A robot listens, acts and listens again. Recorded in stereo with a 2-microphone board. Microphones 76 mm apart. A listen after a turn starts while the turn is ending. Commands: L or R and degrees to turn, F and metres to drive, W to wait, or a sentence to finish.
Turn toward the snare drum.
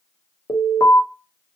W
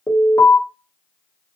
W
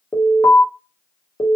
I can't make out a snare drum, only an alarm.